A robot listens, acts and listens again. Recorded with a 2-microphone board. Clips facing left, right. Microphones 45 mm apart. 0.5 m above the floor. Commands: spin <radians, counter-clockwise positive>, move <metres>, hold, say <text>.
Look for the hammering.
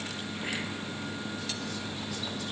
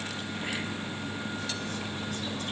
hold
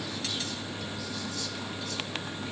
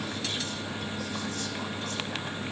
hold
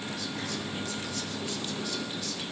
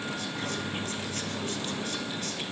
say I can't make out hammering to turn to.